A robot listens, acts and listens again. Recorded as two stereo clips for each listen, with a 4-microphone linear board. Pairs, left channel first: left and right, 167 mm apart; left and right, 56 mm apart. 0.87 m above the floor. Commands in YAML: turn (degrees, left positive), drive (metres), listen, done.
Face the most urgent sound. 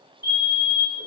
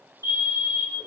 turn: -60
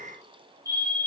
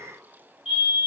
turn: -20
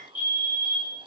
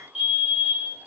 turn: -10
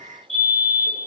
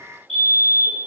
done: "Facing the fire alarm."